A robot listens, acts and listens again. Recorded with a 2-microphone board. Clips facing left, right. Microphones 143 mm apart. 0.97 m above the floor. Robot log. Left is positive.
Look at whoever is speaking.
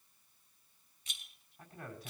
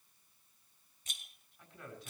note: The man speaking: about 35° left or 145° left.
cmd yaw +35
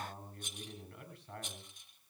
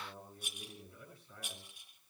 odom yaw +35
note: So it is at 105° left.
cmd yaw +105
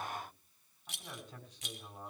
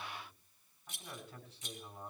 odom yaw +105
note: The man speaking is now 15° left.
cmd yaw +15
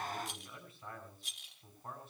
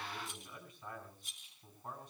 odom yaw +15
end: Found it: a man speaking, straight ahead.